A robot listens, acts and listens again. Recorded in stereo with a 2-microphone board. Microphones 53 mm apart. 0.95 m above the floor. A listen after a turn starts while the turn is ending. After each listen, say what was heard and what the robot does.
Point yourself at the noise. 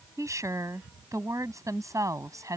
Turn 90° right.
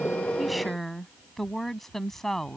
Facing the woman speaking.